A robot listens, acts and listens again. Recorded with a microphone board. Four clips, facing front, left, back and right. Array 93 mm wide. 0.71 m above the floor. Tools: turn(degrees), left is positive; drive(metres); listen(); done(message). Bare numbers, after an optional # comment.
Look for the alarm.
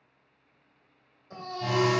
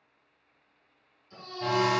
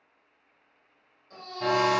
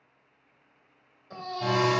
# The alarm: 170° right.
turn(-170)
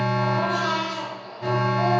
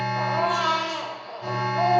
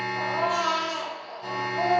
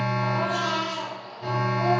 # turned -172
done("Found it: an alarm, straight ahead.")